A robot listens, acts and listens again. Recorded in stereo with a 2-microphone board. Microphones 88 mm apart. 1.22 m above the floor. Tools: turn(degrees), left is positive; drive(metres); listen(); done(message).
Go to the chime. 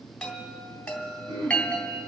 turn(degrees=30)
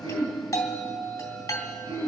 turn(degrees=140)
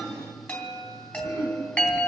turn(degrees=20)
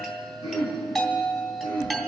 drive(metres=1.0)
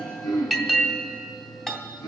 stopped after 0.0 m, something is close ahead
done("Something is in my way. I am facing the chime but have not reached it.")